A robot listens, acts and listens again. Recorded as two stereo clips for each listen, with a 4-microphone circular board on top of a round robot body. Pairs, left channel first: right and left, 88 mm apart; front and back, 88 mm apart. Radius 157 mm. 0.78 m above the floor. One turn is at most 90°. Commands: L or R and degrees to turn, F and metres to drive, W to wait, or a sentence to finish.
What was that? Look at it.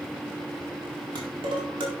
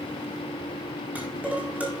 L90
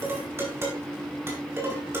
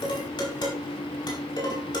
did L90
L30
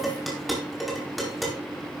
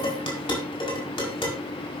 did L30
Facing the dishes clattering.